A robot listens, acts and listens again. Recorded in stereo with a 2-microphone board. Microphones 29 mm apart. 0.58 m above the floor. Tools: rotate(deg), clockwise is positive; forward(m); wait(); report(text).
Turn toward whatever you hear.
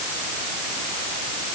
wait()
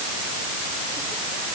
wait()
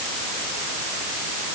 report("I can't make out anything.")